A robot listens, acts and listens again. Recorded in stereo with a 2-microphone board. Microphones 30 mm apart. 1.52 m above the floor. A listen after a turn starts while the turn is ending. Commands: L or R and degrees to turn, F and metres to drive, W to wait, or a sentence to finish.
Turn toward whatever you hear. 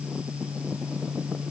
W
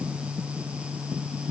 W
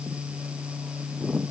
I can't make out anything to turn to.